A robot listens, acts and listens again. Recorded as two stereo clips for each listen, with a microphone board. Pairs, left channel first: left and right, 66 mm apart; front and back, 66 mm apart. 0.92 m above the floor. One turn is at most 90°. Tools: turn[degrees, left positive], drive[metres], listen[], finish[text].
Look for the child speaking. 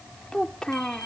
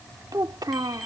Thought: The child speaking: 170° left.
Action: turn[90]
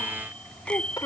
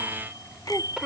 Thought: The child speaking is now 100° left.
Action: turn[90]
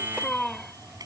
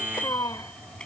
Thought: The child speaking is now 10° left.
Action: turn[10]
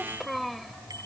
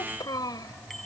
Action: finish[Facing the child speaking.]